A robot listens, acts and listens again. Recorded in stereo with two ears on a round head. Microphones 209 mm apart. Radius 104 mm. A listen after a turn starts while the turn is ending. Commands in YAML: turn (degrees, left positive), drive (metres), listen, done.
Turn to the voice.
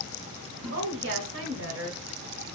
turn: -60
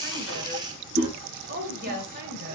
turn: -50
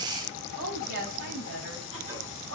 turn: -50
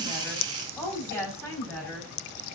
turn: 10
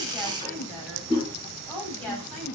done: "Facing the woman speaking, 2 to 4 m away."